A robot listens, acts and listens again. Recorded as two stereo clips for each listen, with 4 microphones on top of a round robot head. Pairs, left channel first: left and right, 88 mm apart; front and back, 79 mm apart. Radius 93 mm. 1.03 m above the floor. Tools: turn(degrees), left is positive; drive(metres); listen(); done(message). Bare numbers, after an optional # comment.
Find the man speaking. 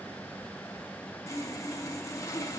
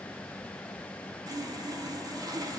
listen()
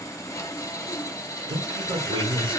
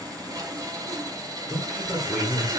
# The man speaking: 90° right.
turn(-90)
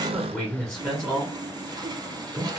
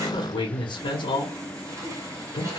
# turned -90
done("Found it: a man speaking, straight ahead.")